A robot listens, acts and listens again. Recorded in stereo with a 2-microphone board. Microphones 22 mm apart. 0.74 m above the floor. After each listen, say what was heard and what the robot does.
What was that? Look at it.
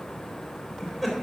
Turn 30° right.
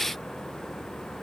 Keep listening.
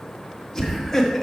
Found it: laughter, straight ahead, 1 to 2 m away.